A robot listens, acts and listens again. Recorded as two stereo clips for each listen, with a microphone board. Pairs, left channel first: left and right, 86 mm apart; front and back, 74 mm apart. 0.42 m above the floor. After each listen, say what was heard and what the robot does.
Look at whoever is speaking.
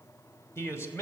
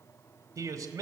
The man speaking: 145° left. Turn 145° left.
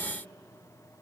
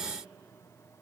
Keep listening.
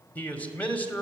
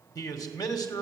The man speaking is now 20° left. Turn 20° left.
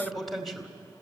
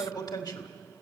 Facing the man speaking.